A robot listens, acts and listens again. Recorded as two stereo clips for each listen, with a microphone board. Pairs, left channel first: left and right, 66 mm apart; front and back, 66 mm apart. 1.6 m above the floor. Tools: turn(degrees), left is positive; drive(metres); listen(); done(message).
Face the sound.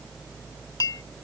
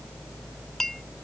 turn(degrees=85)
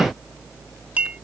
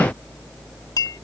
turn(degrees=-20)
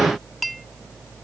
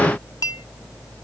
done("Found it: a clink, straight ahead.")